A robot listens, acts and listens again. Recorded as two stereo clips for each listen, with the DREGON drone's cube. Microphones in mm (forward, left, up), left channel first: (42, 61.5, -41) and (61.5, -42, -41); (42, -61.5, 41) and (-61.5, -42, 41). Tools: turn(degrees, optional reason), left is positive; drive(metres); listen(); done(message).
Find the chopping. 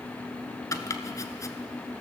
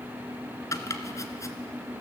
turn(degrees=45, reason="The chopping: 45° left.")
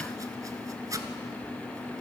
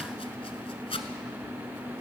turn(degrees=-20, reason="The chopping is now 20° right.")
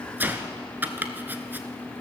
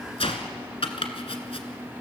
done("Facing the chopping, 1 to 2 m away.")